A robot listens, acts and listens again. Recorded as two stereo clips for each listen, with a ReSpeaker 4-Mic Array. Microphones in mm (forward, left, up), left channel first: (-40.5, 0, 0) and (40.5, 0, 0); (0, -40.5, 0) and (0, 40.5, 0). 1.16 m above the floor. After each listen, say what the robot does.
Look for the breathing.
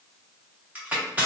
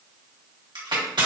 Keep listening.
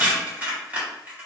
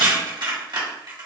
Keep listening.
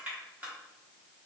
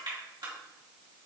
I can't make out breathing to turn to.